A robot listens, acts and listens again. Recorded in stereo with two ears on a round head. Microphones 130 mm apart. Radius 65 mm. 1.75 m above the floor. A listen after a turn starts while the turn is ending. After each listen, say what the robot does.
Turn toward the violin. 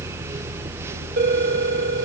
Keep listening.
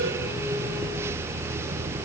Keep listening.
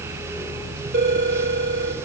I can't make out a violin to turn to.